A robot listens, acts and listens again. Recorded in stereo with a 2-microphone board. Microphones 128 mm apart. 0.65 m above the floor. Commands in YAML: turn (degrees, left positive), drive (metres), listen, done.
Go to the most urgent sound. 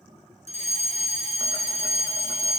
turn: 60
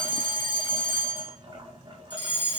turn: 45
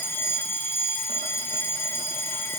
turn: 20
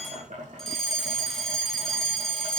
drive: 1.0
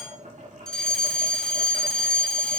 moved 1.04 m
drive: 1.0
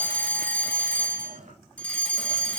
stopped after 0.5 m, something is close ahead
turn: 15
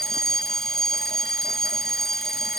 done: "I am next to the fire alarm."